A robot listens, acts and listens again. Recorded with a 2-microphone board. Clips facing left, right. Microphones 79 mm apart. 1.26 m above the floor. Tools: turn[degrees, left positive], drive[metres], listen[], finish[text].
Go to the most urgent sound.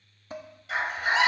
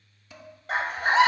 Thought: The scream: about 45° right or 135° right.
Action: turn[-45]
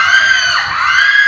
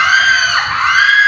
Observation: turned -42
Action: drive[1.0]
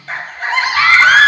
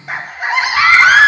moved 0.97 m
Thought: The scream is now 10° right.
Action: turn[-10]
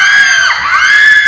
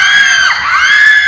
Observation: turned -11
Action: drive[1.0]
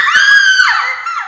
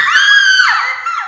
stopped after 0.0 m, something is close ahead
Action: finish[Arrived at the scream, straight ahead.]